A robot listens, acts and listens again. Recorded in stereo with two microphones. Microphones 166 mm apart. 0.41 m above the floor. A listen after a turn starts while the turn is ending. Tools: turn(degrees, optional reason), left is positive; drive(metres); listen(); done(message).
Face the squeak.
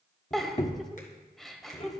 turn(degrees=45, reason="The squeak: about 45° left or 135° left.")
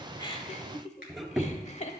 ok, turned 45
done("Facing the squeak, 1 to 2 m away.")